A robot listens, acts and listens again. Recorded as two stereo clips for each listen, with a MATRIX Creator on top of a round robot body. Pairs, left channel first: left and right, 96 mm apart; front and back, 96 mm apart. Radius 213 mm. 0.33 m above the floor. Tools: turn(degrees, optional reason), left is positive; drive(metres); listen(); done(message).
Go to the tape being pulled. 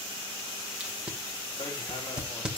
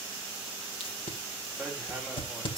turn(degrees=-10, reason="The tape being pulled: 10° right.")
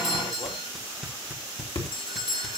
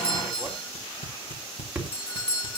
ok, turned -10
drive(metres=1.0)
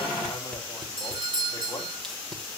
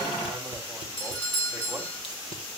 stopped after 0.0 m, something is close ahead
listen()
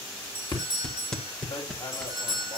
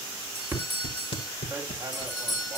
done("Something is in my way. I am facing the tape being pulled but have not reached it.")